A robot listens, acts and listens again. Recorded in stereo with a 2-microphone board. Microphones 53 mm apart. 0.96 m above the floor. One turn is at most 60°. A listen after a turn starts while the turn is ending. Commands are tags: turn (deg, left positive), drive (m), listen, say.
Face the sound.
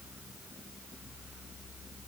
<listen/>
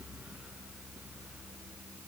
<listen/>
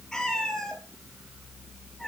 <turn deg="30"/>
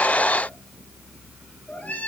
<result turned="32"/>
<turn deg="60"/>
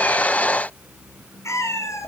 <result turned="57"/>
<turn deg="60"/>
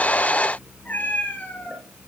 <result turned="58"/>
<turn deg="35"/>
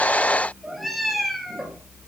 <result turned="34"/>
<say>Found it: a cat meowing, straight ahead.</say>